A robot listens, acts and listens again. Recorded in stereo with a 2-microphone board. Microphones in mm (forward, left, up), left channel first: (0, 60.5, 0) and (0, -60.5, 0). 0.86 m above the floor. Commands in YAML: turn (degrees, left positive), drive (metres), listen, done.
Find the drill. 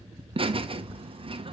listen: true
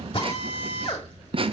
turn: 50
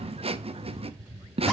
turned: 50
listen: true
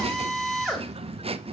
done: "Found it: a drill, straight ahead."